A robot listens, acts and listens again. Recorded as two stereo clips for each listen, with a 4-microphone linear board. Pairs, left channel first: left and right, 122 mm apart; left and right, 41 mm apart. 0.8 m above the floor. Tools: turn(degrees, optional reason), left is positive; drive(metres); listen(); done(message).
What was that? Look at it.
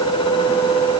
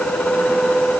listen()
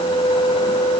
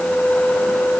listen()
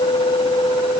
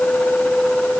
done("I can't make out anything to turn to.")